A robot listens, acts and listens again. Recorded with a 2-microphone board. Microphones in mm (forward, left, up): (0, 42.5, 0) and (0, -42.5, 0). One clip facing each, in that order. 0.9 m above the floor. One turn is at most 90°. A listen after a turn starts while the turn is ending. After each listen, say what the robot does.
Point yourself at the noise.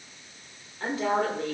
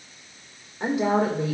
Turn 30° right.
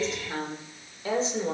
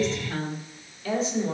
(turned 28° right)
Turn 40° left.
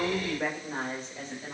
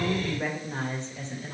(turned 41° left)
Turn 15° left.
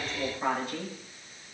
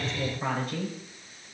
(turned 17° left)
Found it: a woman speaking, straight ahead, 2 to 4 m away.